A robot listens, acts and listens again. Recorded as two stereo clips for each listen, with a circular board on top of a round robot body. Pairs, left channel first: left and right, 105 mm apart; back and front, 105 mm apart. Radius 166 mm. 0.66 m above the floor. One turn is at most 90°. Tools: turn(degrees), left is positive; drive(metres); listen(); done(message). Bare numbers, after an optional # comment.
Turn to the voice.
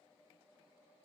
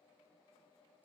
listen()
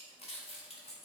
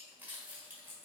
listen()
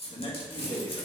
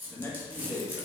# The man speaking: 115° left.
turn(90)
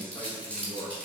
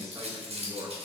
# The man speaking is now 55° left.
turn(55)
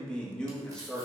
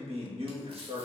# The man speaking is now 10° left.
turn(10)
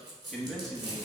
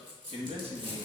done("Found it: a man speaking, straight ahead.")